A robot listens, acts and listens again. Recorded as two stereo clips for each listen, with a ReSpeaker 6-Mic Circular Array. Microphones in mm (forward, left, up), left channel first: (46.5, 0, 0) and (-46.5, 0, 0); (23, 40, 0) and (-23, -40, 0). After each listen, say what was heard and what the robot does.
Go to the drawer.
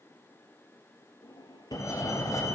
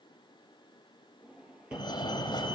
The drawer: 40° right. Turn 40° right.
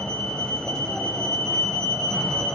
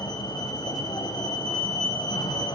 Keep listening.
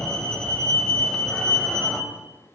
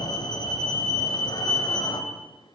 Keep listening.
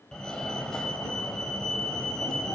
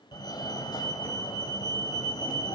I heard a drawer from this way, but can't make it out now. I did not reach it.